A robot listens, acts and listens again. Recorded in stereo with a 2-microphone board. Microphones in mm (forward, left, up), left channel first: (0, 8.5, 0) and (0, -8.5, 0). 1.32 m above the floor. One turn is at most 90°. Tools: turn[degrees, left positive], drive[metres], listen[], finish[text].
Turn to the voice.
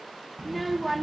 Action: turn[-30]
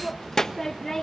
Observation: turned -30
Thought: So it is at 25° left.
Action: turn[25]
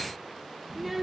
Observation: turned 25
Thought: The child speaking is now 10° right.
Action: turn[-10]
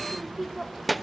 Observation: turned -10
Action: finish[Found it: a child speaking, straight ahead.]